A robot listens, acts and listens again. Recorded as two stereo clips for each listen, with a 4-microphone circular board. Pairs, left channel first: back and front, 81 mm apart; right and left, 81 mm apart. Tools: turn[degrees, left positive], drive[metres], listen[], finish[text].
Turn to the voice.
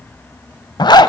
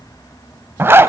Action: listen[]
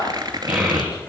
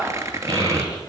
Thought: The child speaking: 75° left.
Action: turn[75]
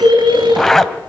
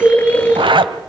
Thought: The child speaking is now 15° left.
Action: turn[15]
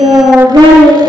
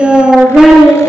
Action: finish[Facing the child speaking.]